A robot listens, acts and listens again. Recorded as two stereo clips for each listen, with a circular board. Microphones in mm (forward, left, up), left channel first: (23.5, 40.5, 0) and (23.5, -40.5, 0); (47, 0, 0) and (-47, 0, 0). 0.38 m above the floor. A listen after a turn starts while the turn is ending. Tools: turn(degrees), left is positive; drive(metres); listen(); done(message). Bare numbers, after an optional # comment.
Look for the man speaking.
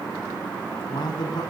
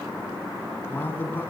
# The man speaking: 70° left.
turn(70)
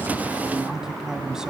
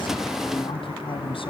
# The man speaking is now 10° right.
turn(-10)
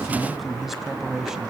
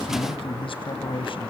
done("Facing the man speaking.")